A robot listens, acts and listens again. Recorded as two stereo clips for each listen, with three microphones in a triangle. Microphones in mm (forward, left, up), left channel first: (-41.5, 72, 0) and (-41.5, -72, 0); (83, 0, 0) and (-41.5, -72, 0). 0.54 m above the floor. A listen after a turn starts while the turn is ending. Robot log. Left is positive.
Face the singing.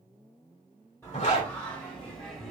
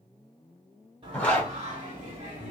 note: The singing: 175° left.
cmd yaw +175
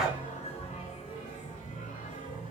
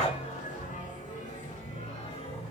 note: The singing is now 75° left.
cmd yaw +75
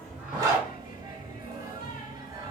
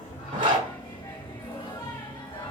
note: The singing is now 25° right.
cmd yaw -25
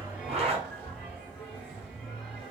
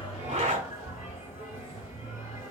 end: Facing the singing.